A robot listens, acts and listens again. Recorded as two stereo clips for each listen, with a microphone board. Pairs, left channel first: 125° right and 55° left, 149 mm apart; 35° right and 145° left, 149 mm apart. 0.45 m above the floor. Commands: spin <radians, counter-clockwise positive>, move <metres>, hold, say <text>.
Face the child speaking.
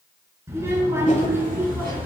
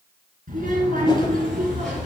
spin 2.27
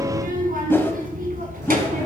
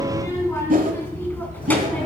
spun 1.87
spin 0.79
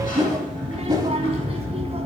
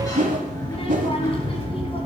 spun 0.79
spin 0.26
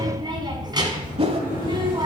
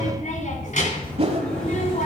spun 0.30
say Found it: a child speaking, straight ahead.